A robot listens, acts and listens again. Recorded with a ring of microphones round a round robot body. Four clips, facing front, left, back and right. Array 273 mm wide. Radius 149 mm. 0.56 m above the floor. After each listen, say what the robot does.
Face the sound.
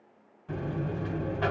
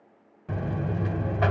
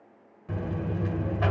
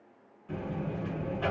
Turn 95° left.
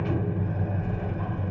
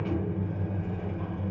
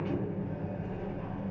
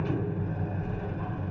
Turn 10° right.
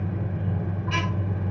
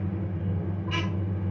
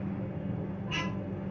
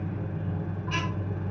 Found it: a buzzer, straight ahead.